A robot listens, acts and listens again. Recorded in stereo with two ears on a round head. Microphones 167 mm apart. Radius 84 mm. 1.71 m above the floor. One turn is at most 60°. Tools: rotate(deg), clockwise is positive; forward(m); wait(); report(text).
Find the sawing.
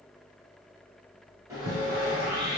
rotate(15)
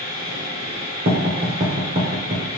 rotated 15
rotate(60)
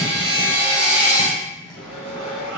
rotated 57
rotate(60)
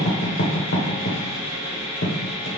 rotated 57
rotate(35)
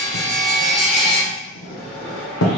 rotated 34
report("Facing the sawing.")